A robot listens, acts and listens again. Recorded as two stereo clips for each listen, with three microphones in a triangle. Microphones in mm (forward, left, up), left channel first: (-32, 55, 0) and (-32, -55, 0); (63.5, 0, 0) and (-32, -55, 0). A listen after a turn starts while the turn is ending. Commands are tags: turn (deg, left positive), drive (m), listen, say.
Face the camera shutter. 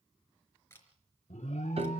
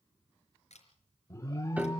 <turn deg="20"/>
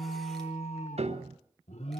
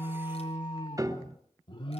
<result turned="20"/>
<listen/>
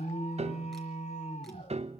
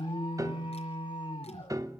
<listen/>
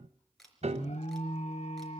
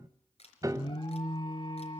<say>Facing the camera shutter, 2 to 4 m away.</say>